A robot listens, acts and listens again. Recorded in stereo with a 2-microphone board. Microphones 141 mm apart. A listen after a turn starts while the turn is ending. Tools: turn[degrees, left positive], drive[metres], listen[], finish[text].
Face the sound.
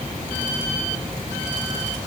Action: listen[]
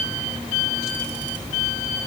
Action: listen[]
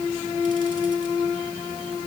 Action: finish[I can't make out anything.]